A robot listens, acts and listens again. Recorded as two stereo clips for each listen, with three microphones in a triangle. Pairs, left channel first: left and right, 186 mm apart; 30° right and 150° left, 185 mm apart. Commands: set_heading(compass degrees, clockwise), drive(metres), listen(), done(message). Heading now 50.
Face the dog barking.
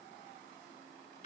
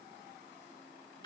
listen()
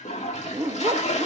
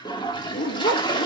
set_heading(70)
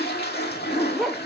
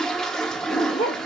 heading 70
done("Found it: a dog barking, straight ahead.")